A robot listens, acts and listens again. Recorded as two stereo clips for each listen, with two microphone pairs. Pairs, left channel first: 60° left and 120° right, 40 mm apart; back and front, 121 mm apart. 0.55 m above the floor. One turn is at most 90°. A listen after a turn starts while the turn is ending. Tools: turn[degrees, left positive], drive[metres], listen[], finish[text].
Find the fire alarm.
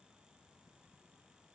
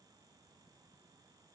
Action: listen[]
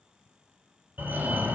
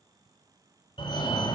Thought: The fire alarm: 145° right.
Action: turn[-90]
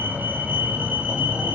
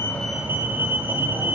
Thought: The fire alarm is now 75° right.
Action: turn[-75]
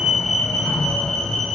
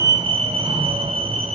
Thought: The fire alarm is now 10° right.
Action: turn[-10]
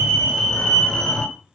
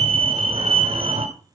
Action: finish[Found it: a fire alarm, straight ahead, 2 to 4 m away.]